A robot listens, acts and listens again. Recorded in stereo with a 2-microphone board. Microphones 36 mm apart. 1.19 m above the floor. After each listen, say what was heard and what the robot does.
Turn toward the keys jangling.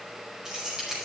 Turn 30° right.
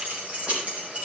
So it is at 145° right. Turn 145° right.
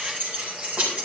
The keys jangling is now 45° right. Turn 45° right.
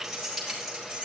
Facing the keys jangling.